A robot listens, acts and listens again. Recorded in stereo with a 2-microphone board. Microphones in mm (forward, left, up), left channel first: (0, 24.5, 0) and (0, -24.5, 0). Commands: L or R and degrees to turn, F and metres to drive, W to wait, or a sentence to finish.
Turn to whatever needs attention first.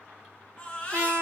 L25
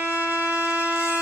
W
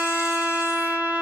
W
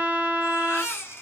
L125
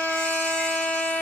W
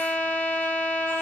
W
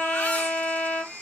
L30
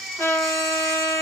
Found it: a baby crying, straight ahead.